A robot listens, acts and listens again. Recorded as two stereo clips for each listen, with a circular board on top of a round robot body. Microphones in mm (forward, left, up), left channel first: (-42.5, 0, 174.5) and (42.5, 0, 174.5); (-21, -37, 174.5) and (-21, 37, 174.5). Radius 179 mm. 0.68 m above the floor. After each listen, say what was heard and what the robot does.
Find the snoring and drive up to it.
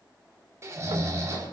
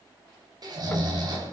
The snoring: 60° left. Turn 60° left.
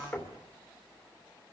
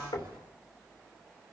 Keep listening.
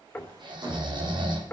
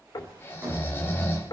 The snoring is now 30° right. Turn 30° right.
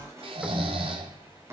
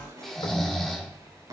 Drive 1.0 m forward.
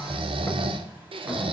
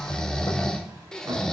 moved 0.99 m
The snoring is now 10° right. Turn 10° right.
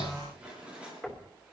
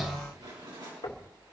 Keep listening.
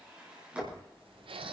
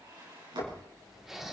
Drive 1.0 m forward.
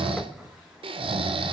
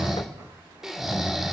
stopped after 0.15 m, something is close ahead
Arrived at the snoring, straight ahead.